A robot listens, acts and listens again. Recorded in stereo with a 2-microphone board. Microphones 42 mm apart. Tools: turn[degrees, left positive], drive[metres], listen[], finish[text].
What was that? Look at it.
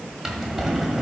Action: turn[-30]
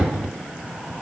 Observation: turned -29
Action: listen[]
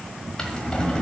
Thought: So it is at 20° left.
Action: turn[20]
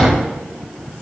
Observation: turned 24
Action: finish[Facing the drawer.]